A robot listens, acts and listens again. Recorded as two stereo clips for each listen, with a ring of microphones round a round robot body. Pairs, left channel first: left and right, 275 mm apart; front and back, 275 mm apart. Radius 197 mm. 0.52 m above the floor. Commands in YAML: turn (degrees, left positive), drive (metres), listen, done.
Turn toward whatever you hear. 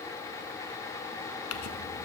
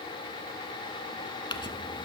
turn: 75
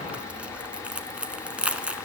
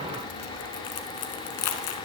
done: "Found it: crumpling, straight ahead, under 1 m away."